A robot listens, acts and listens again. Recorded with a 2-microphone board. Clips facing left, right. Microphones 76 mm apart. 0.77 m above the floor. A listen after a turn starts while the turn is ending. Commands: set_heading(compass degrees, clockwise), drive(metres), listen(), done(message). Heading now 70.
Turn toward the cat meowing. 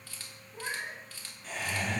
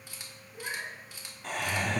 set_heading(15)
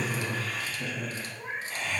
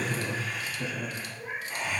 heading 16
set_heading(301)
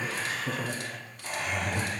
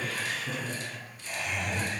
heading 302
listen()
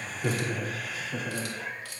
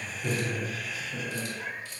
done("Facing the cat meowing, 2 to 4 m away.")